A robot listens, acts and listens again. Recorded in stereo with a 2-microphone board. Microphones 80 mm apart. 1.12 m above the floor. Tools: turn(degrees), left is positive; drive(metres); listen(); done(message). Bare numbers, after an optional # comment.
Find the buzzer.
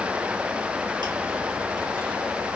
listen()
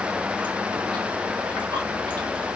listen()
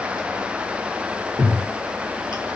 done("I can't make out a buzzer, only chewing.")